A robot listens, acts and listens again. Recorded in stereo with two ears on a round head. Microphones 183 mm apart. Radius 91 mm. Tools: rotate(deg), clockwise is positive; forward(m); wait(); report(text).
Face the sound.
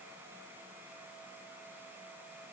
wait()
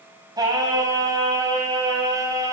rotate(15)
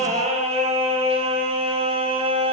rotate(30)
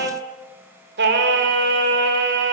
rotate(125)
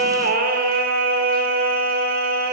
rotate(45)
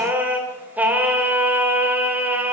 rotate(10)
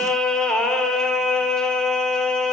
report("Facing the singing.")